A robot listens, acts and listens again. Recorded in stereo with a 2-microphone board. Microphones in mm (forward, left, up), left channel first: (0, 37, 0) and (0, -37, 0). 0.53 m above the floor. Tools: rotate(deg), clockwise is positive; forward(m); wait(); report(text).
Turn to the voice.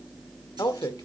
rotate(-55)
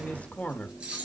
rotate(-25)
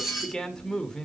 rotate(-10)
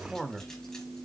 report("Facing the man speaking, 1 to 2 m away.")